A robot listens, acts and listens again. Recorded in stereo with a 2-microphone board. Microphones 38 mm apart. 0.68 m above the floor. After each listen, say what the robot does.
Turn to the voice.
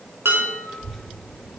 Turn 30° left.
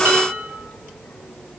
Turn 155° left.
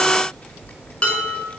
Turn 50° left.
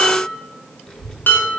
Turn 30° left.
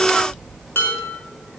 Facing the child speaking.